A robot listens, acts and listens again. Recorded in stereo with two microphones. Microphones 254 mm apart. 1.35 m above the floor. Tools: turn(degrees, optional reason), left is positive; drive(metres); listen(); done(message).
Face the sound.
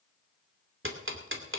turn(degrees=-55, reason="The ticking: about 55° right or 125° right.")
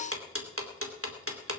turn(degrees=-70, reason="So it is at 70° right.")
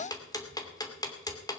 turn(degrees=15, reason="The ticking is now 15° left.")
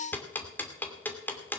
turn(degrees=10, reason="The ticking is now 10° left.")
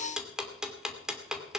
done("Facing the ticking, 2 to 4 m away.")